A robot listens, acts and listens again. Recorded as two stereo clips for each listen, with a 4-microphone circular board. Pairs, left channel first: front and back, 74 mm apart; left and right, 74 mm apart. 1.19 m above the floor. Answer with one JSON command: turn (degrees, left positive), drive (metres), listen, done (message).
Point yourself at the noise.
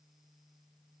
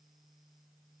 {"listen": true}
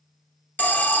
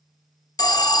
{"turn": 65}
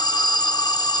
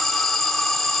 {"done": "Found it: an alarm, straight ahead, under 1 m away."}